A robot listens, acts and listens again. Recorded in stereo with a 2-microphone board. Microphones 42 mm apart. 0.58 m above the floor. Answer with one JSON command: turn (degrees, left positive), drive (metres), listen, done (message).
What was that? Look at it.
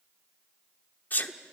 {"turn": 45}
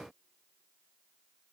{"listen": true}
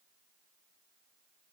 {"done": "I heard a sneeze, but can't make it out now. It was about straight ahead or 90° left."}